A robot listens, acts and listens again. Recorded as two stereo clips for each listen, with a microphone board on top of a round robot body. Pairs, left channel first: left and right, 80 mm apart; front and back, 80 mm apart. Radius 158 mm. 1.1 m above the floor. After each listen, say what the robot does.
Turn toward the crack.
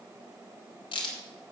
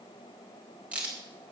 Turn 105° left.
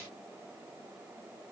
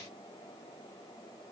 Facing where the crack came from. I can't hear it now.